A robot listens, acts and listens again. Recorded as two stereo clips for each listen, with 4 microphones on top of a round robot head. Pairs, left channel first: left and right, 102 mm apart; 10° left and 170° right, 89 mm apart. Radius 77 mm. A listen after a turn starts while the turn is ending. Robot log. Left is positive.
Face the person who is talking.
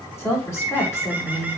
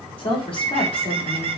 note: The woman speaking: 30° left.
cmd yaw +30
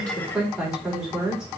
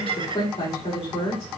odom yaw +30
end: Found it: a woman speaking, straight ahead.